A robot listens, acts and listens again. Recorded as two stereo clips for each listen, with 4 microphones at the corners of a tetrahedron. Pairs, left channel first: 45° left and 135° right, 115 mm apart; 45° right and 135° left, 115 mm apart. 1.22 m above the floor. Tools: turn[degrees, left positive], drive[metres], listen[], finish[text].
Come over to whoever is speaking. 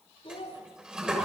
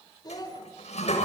Thought: The child speaking: 10° left.
Action: turn[10]
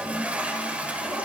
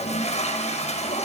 Action: listen[]
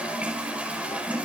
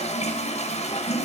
Action: listen[]
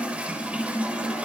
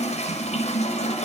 Action: finish[Facing where the child speaking came from. I can't hear it now. I did not reach it.]